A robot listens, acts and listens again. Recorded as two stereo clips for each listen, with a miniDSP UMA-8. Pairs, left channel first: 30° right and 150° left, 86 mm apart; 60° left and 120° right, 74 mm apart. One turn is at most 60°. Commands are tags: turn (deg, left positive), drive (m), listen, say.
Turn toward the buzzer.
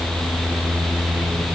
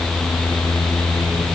<listen/>
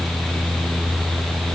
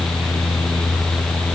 <listen/>
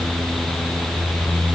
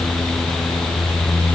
<say>I can't make out a buzzer.</say>